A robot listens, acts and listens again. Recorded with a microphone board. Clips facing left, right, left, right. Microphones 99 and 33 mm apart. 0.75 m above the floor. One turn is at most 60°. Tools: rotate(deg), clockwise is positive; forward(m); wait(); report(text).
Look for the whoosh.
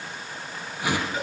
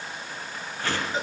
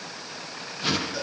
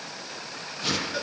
rotate(-30)
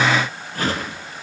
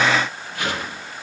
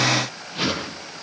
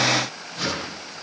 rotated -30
rotate(-60)
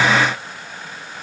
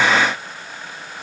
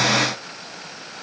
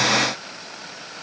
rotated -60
rotate(-60)
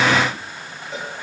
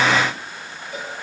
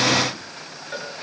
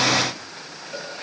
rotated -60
rotate(-20)
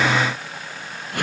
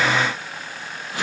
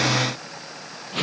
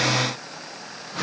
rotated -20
rotate(-60)
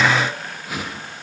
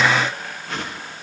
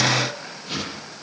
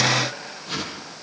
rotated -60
report("Found it: a whoosh, straight ahead, over 4 m away.")